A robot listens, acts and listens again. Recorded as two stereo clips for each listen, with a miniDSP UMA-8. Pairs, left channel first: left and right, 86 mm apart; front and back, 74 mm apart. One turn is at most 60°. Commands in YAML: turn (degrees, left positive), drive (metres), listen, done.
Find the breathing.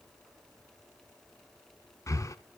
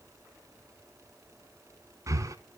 turn: 60
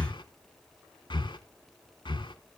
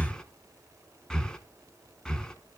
turn: 60
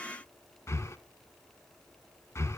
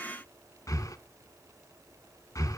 turn: 35
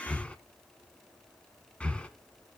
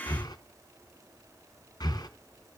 turn: 15
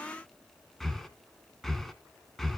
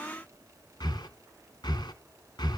done: "Facing the breathing, 1 to 2 m away."